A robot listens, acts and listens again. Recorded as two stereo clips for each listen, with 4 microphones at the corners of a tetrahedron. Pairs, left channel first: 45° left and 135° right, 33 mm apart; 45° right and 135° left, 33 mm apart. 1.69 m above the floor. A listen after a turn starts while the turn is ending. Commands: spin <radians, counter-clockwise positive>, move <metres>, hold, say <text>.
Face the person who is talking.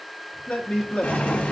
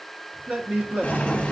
spin 1.57
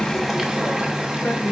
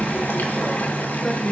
hold
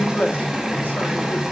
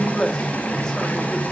spin 0.44
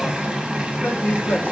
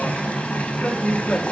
spin 0.17
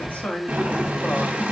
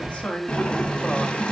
say Found it: a man speaking, straight ahead.